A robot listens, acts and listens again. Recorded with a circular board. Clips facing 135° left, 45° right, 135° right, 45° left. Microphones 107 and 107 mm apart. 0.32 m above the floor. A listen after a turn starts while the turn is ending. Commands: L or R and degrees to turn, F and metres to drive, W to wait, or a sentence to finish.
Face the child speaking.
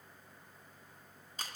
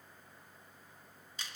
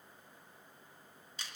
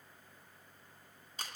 W
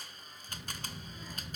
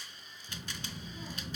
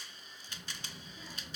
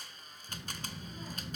Facing the child speaking, 2 to 4 m away.